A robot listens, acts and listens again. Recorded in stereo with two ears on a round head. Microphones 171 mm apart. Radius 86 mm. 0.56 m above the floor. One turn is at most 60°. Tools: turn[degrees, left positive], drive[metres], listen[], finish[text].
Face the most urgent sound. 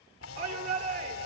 Thought: The shout: about 55° right or 125° right.
Action: turn[-55]
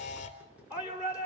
Thought: So it is at 10° right.
Action: turn[-10]
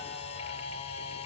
Action: listen[]
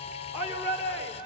Action: finish[Found it: a shout, straight ahead.]